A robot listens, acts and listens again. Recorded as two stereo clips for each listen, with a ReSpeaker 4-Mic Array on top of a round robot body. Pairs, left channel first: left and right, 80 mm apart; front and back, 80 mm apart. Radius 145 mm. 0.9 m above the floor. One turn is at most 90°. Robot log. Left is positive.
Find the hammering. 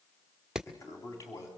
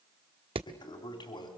note: The hammering: 175° right.
cmd yaw -90
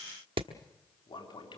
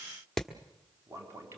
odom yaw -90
note: The hammering is now 90° right.
cmd yaw -90
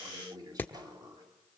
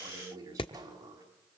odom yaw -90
note: The hammering is now 20° left.
cmd yaw +20
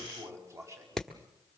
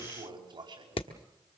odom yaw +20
end: Facing the hammering, 1 to 2 m away.